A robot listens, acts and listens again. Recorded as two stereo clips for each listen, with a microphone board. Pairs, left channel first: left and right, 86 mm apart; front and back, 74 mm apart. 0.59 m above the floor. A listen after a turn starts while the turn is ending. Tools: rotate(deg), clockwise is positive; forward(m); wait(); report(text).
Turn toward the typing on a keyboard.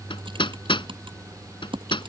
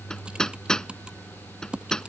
rotate(105)
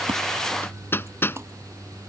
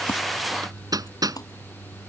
rotate(30)
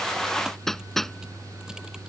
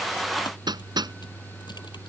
wait()
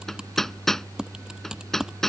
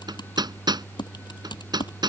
rotate(10)
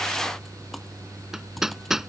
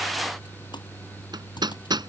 wait()
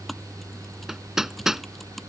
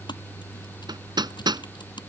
report("Found it: typing on a keyboard, straight ahead.")